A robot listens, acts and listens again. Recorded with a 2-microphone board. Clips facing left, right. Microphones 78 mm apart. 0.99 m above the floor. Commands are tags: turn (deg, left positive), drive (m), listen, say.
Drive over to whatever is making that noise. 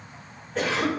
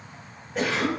<turn deg="-30"/>
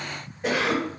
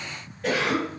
<turn deg="20"/>
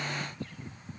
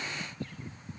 <listen/>
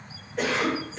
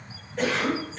<drive m="1.0"/>
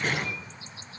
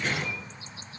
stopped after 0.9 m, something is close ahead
<say>Arrived at the cough, straight ahead.</say>